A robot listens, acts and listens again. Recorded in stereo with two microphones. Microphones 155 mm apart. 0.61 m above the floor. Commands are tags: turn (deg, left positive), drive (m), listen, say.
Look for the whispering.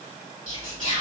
<turn deg="-50"/>
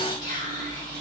<turn deg="-70"/>
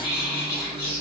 <say>Found it: whispering, straight ahead, 2 to 4 m away.</say>